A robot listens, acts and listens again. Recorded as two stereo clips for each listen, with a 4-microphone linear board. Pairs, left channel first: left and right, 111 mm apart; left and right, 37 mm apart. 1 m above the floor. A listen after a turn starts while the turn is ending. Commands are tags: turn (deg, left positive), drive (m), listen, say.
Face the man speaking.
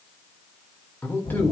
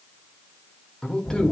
<turn deg="20"/>
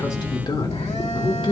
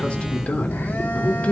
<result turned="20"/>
<turn deg="130"/>
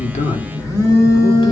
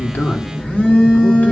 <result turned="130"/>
<listen/>
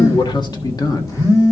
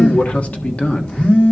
<turn deg="35"/>
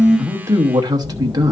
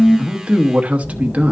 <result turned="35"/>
<turn deg="-35"/>
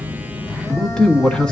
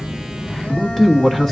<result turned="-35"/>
<say>Facing the man speaking, 1 to 2 m away.</say>